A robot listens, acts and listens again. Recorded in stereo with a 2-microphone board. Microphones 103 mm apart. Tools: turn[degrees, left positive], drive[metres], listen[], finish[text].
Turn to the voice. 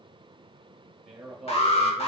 Action: turn[-30]
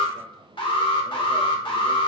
Action: listen[]
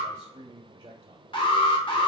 Thought: So it is at 135° right.
Action: turn[-135]
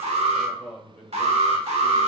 Thought: The man speaking is now 15° left.
Action: turn[15]
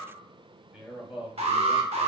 Action: finish[Found it: a man speaking, straight ahead.]